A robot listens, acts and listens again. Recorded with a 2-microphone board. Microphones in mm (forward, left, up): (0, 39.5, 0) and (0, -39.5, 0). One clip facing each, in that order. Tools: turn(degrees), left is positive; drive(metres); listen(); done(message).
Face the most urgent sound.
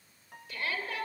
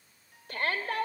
turn(degrees=-50)
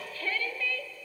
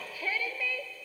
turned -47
turn(degrees=-15)
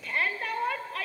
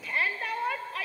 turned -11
done("Facing the shout, 2 to 4 m away.")